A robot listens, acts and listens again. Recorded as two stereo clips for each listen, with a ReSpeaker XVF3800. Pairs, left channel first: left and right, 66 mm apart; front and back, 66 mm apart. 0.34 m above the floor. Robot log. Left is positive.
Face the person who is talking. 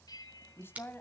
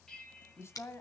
note: The woman speaking: 40° left.
cmd yaw +40
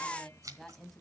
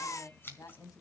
end: Found it: a woman speaking, straight ahead, 2 to 4 m away.